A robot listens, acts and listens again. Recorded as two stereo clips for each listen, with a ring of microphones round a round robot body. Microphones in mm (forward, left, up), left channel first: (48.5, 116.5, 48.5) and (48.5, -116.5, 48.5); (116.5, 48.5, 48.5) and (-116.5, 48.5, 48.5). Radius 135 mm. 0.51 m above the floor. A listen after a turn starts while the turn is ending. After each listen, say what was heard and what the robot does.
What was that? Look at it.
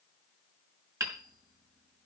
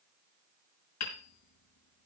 The hammering: 15° right. Turn 15° right.
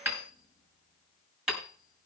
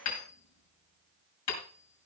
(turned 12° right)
Found it: hammering, straight ahead, over 4 m away.